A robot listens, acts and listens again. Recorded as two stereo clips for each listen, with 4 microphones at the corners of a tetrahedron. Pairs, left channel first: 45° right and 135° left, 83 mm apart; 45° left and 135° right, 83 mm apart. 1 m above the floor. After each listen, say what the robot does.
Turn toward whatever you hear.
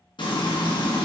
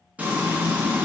Turn 60° right.
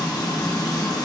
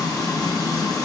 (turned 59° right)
Facing the frying, under 1 m away.